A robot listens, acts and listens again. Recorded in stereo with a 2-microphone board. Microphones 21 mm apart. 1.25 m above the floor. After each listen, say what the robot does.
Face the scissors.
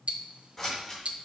Turn 25° left.
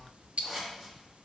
Found it: scissors, straight ahead, 2 to 4 m away.